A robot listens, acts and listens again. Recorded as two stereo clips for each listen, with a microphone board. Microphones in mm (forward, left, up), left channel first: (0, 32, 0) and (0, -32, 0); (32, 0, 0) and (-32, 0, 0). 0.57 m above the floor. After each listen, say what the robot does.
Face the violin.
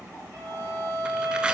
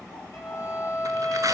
Turn 40° right.
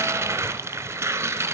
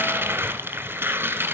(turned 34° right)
Keep listening.
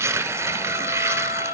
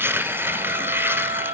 Facing the violin.